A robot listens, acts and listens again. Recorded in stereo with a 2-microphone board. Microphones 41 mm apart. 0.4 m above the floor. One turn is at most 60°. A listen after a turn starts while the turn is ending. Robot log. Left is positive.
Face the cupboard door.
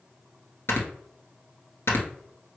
cmd idle
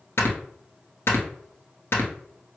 cmd idle
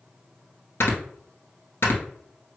end: I can't make out a cupboard door, only snoring.